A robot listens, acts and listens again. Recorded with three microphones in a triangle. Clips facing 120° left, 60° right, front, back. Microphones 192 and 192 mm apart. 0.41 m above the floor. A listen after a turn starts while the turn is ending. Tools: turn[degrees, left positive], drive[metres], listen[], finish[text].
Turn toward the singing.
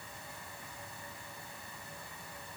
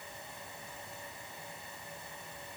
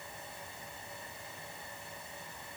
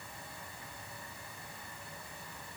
Action: listen[]
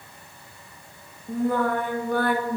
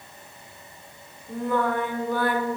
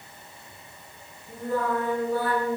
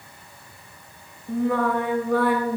Thought: The singing: 160° left.
Action: turn[160]
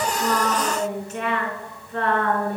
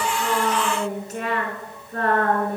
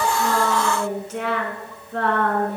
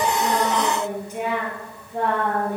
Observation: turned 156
Thought: The singing is now 10° right.
Action: turn[-10]
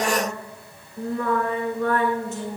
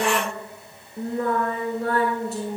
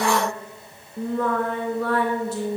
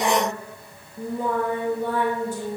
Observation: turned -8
Action: finish[Facing the singing.]